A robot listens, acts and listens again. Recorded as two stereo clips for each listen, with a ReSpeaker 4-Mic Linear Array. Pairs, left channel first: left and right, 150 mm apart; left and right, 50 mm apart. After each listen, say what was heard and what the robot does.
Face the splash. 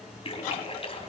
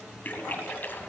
The splash: about 40° left or 140° left. Turn 40° left.
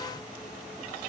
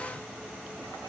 Keep listening.
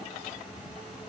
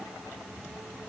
I heard a splash, but can't make it out now. It was about straight ahead or 100° left.